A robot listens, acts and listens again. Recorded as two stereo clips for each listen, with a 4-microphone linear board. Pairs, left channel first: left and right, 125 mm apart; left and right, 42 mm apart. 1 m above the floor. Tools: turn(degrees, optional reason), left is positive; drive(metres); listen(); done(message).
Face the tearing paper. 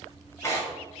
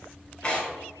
turn(degrees=20, reason="The tearing paper: about 20° left or 160° left.")
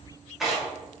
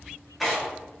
done("Found it: tearing paper, straight ahead.")